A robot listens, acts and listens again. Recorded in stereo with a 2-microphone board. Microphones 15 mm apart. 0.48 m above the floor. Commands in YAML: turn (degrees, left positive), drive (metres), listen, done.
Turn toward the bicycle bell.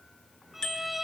turn: 55
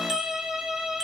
listen: true
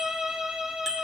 done: "Facing the bicycle bell, over 4 m away."